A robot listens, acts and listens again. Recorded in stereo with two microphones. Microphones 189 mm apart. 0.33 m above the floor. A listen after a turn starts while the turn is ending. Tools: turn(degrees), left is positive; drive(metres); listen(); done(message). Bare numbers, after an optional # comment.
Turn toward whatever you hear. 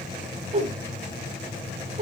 # The whoosh: about 35° right or 145° right.
turn(-35)
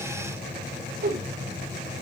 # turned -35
# So it is at 105° right.
turn(-105)
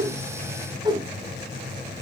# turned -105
# The whoosh is now 25° right.
turn(-25)
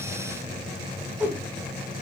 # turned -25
# The whoosh is now 10° right.
turn(-10)
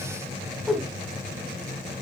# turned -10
done("Found it: a whoosh, straight ahead, 1 to 2 m away.")